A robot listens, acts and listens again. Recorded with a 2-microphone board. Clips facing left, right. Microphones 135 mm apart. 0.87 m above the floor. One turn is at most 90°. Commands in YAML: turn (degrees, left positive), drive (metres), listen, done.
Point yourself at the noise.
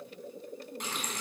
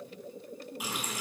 turn: -30
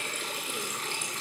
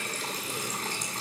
turn: -90
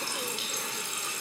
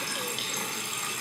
turn: -55
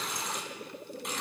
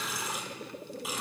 done: "Found it: a running tap, straight ahead, over 4 m away."